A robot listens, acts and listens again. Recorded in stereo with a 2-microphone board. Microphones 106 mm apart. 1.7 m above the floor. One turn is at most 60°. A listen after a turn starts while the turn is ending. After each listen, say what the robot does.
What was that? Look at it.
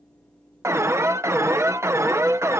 Turn 25° right.
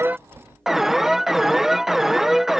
Facing the alarm.